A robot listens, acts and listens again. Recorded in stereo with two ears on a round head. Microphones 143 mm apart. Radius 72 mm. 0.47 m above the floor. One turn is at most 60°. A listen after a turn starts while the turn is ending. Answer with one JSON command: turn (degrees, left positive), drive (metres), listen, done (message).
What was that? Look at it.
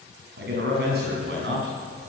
{"turn": -60}
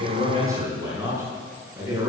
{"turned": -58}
{"turn": -20}
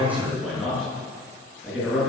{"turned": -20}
{"done": "Facing the man speaking, over 4 m away."}